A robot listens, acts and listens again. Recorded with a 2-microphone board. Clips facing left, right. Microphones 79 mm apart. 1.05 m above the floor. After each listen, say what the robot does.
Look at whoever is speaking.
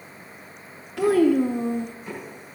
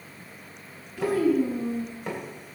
Turn 90° left.
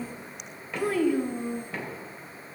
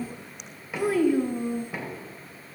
Facing the child speaking.